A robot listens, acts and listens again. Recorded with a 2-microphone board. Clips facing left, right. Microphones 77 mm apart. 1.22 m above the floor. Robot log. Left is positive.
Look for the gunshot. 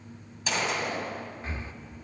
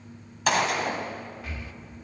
note: The gunshot: about 65° right or 115° right.
cmd yaw -65
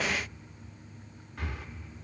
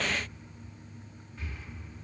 cmd idle
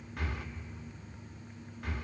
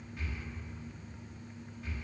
end: I heard a gunshot, but can't make it out now. It was about straight ahead or 50° right.